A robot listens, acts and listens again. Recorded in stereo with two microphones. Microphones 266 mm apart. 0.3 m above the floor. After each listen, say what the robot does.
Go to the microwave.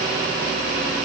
Keep listening.
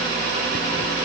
Keep listening.
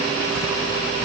I can't make out a microwave.